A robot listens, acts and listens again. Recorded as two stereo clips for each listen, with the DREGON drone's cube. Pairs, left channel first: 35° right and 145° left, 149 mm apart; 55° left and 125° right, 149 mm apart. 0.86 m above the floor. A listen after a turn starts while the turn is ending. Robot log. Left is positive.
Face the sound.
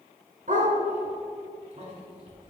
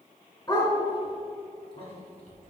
note: The dog barking: 115° left.
cmd yaw +115
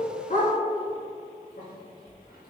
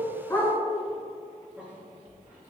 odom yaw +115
note: The dog barking is now 50° right.
cmd yaw -50
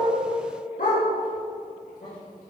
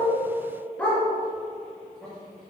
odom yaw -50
note: The dog barking is now 25° right.
cmd yaw -25
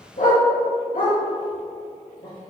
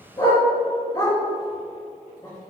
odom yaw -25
note: The dog barking is now 10° right.
cmd yaw -10
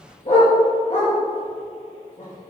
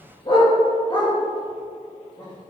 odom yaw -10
end: Facing the dog barking, 2 to 4 m away.